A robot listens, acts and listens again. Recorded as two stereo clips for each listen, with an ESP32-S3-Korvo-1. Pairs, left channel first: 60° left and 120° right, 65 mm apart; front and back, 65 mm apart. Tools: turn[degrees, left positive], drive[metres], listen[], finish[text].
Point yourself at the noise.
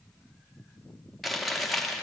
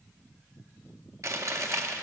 Thought: The chewing: 150° left.
Action: turn[150]
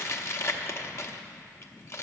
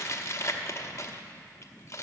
Thought: The chewing is now 30° left.
Action: turn[30]
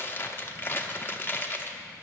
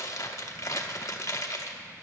Thought: The chewing is now 15° left.
Action: turn[15]
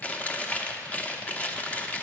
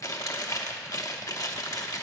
Action: finish[Facing the chewing, under 1 m away.]